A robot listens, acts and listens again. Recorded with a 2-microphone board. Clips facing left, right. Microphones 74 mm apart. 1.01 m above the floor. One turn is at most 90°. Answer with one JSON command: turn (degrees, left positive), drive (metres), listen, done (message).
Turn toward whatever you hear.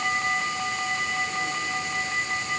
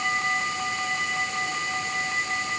{"listen": true}
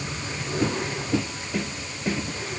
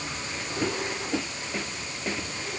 {"turn": 65}
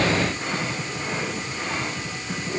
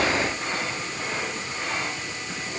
{"listen": true}
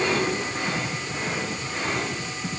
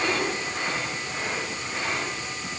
{"listen": true}
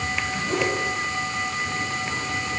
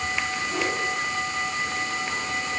{"turn": 55}
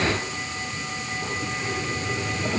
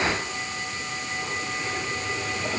{"listen": true}
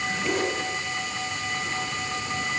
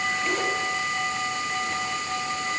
{"done": "Facing the zipper, over 4 m away."}